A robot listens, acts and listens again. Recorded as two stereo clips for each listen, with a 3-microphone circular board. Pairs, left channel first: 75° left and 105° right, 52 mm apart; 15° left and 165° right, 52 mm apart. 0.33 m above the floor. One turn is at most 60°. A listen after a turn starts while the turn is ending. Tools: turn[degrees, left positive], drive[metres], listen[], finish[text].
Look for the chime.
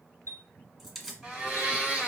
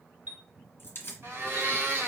Thought: The chime: 115° right.
Action: turn[-60]
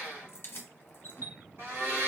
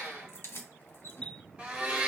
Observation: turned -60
Thought: The chime is now 60° right.
Action: turn[-60]
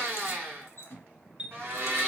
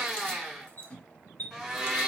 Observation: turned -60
Thought: The chime is now 30° right.
Action: turn[-30]
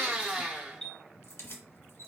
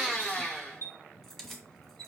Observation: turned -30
Action: finish[Found it: a chime, straight ahead.]